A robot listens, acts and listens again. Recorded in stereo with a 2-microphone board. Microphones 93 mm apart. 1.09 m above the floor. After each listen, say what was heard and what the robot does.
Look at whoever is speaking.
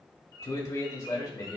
The man speaking: about 45° left or 135° left. Turn 45° left.
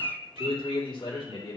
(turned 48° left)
So it is at 75° left. Turn 75° left.
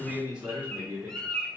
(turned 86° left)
The man speaking is now 20° right. Turn 20° right.
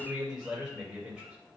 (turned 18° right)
Facing the man speaking.